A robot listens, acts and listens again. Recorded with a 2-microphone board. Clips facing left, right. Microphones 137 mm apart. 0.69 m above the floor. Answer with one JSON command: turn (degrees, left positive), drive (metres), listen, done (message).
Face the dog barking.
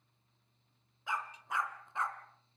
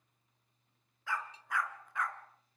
{"turn": 25}
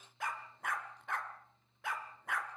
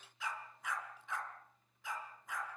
{"turn": 110}
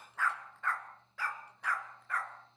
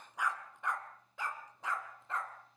{"turn": -20}
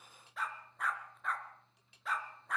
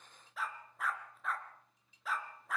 {"done": "Facing the dog barking."}